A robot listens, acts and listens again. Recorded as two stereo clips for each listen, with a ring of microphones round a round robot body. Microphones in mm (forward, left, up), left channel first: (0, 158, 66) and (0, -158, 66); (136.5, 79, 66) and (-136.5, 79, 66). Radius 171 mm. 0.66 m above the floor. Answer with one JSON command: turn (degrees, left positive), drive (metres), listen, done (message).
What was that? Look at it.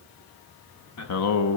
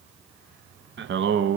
{"turn": 135}
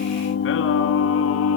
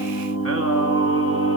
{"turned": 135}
{"turn": 40}
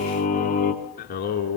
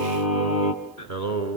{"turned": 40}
{"turn": 30}
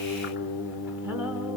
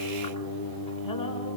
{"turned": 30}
{"done": "Facing the singing."}